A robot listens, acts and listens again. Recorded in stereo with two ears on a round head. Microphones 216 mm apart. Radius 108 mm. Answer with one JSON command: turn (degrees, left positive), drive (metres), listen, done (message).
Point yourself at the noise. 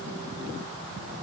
{"listen": true}
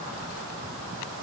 {"listen": true}
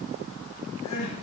{"turn": 90}
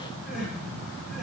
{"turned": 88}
{"done": "Found it: crying, straight ahead."}